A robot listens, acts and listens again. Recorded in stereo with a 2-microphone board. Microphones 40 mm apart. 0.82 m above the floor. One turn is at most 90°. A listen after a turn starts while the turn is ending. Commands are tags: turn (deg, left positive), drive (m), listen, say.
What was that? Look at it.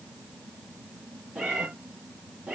<turn deg="-30"/>
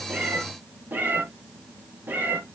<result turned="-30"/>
<turn deg="-90"/>
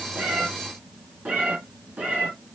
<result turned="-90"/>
<turn deg="-35"/>
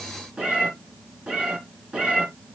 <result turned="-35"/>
<turn deg="-25"/>
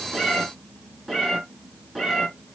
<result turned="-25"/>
<say>Facing the cat meowing.</say>